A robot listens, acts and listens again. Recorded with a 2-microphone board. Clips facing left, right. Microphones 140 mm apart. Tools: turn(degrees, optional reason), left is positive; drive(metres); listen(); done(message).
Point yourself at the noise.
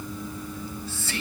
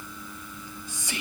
turn(degrees=-15, reason="The whispering: about 15° right or 165° right.")
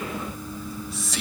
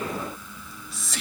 done("Facing the whispering, 2 to 4 m away.")